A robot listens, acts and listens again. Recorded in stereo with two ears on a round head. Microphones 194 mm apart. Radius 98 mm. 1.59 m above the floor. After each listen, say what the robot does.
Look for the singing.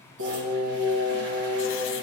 Turn 55° right.
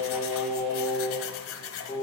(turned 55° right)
Found it: singing, straight ahead.